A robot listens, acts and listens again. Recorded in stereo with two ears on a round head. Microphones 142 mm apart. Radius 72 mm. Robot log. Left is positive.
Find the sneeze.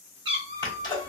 note: The sneeze: about 30° left or 150° left.
cmd yaw +30
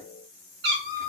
cmd idle
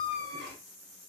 end: I heard a sneeze, but can't make it out now. It was about straight ahead or 120° left.